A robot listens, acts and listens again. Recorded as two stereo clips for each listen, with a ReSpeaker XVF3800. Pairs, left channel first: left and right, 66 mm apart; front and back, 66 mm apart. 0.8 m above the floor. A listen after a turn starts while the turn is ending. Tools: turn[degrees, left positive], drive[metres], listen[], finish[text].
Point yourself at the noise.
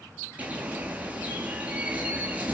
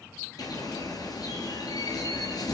Thought: The bird: 20° right.
Action: turn[-20]
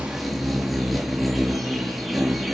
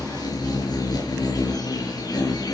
Action: finish[Facing the bird.]